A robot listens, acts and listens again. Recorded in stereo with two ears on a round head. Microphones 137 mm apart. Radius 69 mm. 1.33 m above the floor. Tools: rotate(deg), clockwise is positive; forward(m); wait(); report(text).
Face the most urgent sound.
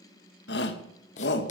rotate(-90)
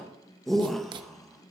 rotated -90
report("Found it: a shout, straight ahead.")